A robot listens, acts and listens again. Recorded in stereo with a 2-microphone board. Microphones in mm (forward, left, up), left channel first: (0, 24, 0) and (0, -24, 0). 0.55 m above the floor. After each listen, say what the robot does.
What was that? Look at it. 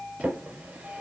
Turn 30° right.
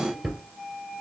Found it: a drawer, straight ahead, 2 to 4 m away.